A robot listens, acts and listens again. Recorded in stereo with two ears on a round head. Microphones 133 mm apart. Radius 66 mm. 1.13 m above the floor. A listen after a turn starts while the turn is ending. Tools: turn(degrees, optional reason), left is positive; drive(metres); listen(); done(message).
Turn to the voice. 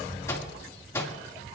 listen()
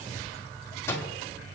listen()
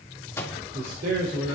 turn(degrees=-65, reason="The man speaking: about 65° right or 115° right.")
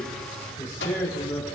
turn(degrees=10, reason="So it is at 10° left.")
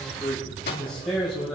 done("Found it: a man speaking, straight ahead, over 4 m away.")